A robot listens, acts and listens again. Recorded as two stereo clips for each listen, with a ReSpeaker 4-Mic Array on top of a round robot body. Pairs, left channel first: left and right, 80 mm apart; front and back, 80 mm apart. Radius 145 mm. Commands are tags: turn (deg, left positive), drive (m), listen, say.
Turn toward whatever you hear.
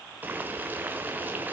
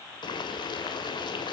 <turn deg="-25"/>
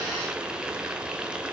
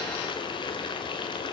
<turn deg="-10"/>
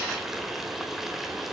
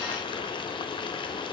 <say>Found it: boiling, straight ahead, 1 to 2 m away.</say>